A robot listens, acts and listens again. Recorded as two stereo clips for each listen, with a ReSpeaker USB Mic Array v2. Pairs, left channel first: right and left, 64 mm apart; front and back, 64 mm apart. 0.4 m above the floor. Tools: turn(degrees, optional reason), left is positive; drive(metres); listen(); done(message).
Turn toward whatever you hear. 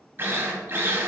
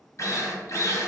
turn(degrees=35, reason="The drill: 35° left.")
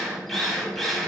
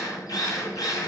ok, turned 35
done("Found it: a drill, straight ahead.")